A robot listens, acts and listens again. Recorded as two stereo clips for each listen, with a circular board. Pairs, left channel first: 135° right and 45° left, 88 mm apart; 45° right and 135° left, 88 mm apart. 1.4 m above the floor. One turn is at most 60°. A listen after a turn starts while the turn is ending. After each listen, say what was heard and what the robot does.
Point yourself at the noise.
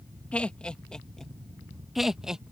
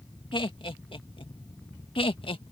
The laughter: 40° right. Turn 40° right.
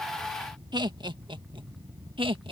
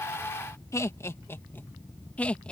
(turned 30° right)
The laughter is now 30° left. Turn 30° left.
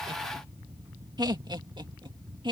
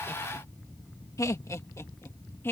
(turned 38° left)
The laughter is now 15° left. Turn 15° left.
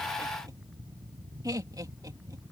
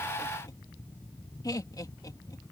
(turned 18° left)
Found it: laughter, straight ahead.